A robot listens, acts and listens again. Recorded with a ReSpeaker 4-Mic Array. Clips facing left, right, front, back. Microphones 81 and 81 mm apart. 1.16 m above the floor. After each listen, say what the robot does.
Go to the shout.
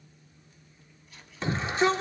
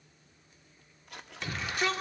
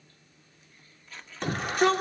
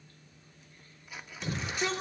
Turn 30° left.
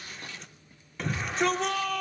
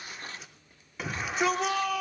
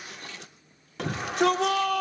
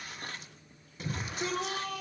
Drive 1.0 m forward.
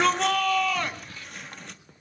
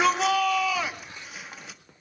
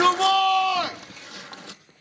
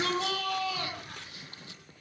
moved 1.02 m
Drive 1.0 m forward.
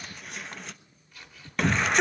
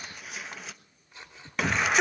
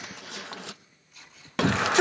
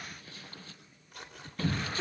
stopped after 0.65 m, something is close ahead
Arrived at the shout, straight ahead.